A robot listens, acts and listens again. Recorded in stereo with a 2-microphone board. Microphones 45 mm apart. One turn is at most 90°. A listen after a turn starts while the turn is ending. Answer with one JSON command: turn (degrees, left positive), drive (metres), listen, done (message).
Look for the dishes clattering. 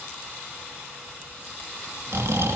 {"listen": true}
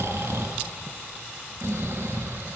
{"listen": true}
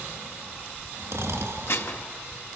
{"turn": 65}
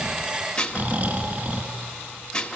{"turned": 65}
{"turn": 25}
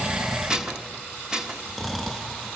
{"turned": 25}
{"turn": -15}
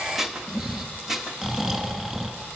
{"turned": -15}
{"done": "Found it: dishes clattering, straight ahead."}